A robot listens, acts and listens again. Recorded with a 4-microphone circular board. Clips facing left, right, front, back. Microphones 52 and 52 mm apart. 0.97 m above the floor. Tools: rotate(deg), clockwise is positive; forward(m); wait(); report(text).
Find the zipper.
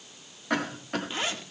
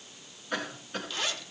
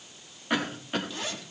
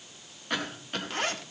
rotate(-150)
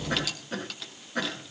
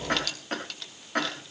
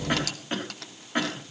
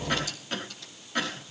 report("Found it: a zipper, straight ahead, 2 to 4 m away.")